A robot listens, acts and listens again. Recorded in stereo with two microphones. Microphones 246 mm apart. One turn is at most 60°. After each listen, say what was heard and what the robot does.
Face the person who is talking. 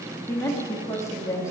Turn 30° left.
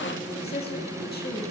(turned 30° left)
So it is at 135° left. Turn 60° left.
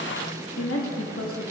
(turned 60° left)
The woman speaking is now 90° left. Turn 60° left.
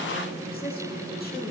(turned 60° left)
The woman speaking is now 45° left. Turn 45° left.
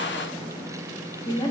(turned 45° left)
The woman speaking is now 20° left. Turn 20° left.
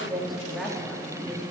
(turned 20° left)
Facing the woman speaking, 2 to 4 m away.